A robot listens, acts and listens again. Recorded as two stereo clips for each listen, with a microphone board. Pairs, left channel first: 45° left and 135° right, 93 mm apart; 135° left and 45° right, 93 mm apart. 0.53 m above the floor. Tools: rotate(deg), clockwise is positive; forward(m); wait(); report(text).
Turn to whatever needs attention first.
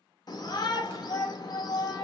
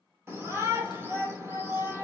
rotate(-10)
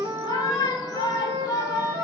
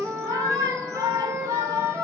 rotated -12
report("Found it: a shout, straight ahead.")